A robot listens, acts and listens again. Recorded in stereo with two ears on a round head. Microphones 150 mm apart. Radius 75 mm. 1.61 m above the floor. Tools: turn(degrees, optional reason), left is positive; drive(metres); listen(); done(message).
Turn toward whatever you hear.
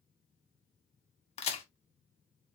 turn(degrees=40, reason="The crack: about 40° left or 140° left.")
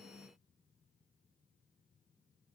listen()
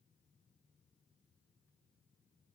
done("I heard a crack, but can't make it out now. It was about straight ahead or 100° left.")